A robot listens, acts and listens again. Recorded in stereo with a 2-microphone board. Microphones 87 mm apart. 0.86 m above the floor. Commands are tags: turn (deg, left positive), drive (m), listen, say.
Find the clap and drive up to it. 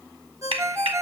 <turn deg="-90"/>
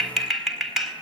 <drive m="1.0"/>
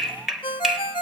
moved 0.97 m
<drive m="1.0"/>
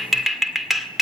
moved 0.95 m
<drive m="1.0"/>
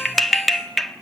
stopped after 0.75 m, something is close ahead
<say>I am next to the clap.</say>